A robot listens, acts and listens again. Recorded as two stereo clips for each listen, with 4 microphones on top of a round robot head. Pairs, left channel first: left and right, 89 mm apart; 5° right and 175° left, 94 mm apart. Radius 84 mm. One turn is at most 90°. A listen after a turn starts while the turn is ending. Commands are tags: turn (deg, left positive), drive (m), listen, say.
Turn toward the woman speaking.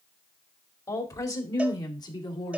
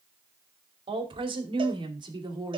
<turn deg="90"/>
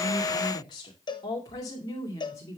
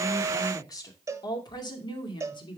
<turn deg="25"/>
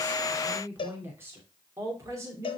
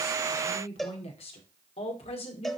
<turn deg="-25"/>
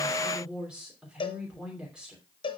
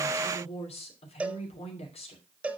<turn deg="-10"/>
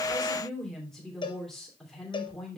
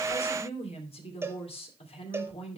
<say>Facing the woman speaking, 2 to 4 m away.</say>